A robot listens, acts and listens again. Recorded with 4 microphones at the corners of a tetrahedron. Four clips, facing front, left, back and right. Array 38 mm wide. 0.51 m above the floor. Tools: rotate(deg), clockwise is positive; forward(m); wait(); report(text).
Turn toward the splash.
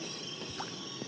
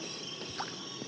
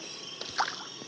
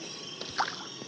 rotate(140)
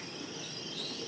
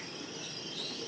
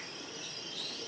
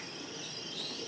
report("I heard a splash from this way, but can't make it out now.")